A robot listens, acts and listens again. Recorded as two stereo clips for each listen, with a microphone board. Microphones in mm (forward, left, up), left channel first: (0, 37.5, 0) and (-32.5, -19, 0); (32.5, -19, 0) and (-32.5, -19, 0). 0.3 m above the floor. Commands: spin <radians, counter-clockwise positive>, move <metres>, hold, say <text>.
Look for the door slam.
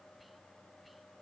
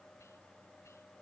hold
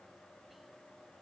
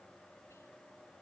hold
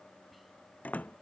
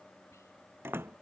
spin 2.18
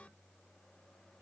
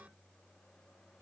say I heard a door slam from this way, but can't make it out now.